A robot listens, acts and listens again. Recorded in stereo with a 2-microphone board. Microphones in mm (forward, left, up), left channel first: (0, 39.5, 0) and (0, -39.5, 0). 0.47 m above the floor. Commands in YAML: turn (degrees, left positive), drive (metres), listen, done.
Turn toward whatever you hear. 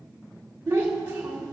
turn: -30
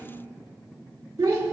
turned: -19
turn: -135
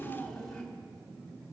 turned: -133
turn: 10
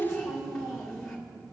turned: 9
done: "Found it: a child speaking, straight ahead."